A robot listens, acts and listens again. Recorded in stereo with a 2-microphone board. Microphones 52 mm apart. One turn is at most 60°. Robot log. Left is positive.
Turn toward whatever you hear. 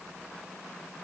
cmd idle
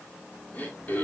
note: The throat clearing: about 35° left or 145° left.
cmd yaw +35
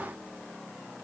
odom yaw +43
cmd idle
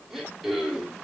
end: Facing the throat clearing.